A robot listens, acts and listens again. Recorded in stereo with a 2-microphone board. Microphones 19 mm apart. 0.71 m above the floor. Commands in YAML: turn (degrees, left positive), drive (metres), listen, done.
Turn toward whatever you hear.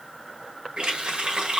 turn: -90
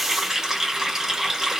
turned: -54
turn: -30
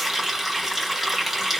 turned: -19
turn: -10
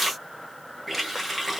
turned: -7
done: "Facing the running tap, 1 to 2 m away."